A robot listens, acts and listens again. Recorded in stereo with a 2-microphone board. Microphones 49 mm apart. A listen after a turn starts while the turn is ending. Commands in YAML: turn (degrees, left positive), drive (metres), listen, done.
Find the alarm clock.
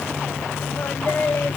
listen: true
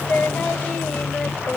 listen: true
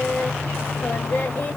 done: "I can't make out an alarm clock to turn to."